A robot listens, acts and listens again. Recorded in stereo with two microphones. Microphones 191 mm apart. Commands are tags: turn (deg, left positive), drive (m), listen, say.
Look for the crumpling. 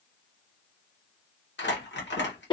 <turn deg="70"/>
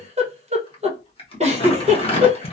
<turn deg="30"/>
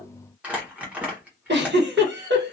<turn deg="-10"/>
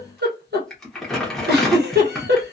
<say>Facing the crumpling.</say>